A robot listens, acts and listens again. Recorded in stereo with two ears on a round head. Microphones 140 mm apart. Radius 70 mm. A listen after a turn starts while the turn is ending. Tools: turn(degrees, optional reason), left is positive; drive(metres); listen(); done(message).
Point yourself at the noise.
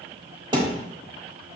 turn(degrees=-35, reason="The thud: about 35° right or 145° right.")
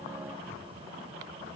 listen()
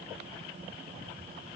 done("I heard a thud, but can't make it out now. It was about straight ahead or 110° right.")